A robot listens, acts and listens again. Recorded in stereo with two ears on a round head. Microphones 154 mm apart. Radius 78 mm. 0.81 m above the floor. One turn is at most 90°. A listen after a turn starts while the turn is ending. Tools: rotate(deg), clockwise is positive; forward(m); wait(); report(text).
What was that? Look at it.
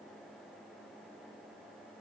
wait()
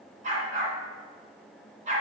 rotate(45)
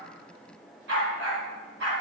rotate(90)
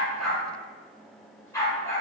rotate(-20)
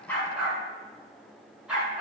report("Found it: a dog barking, straight ahead, 2 to 4 m away.")